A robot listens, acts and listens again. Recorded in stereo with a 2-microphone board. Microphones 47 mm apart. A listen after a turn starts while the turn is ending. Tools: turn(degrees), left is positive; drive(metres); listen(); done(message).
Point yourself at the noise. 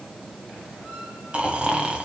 turn(degrees=-25)
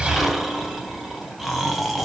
done("Facing the snoring.")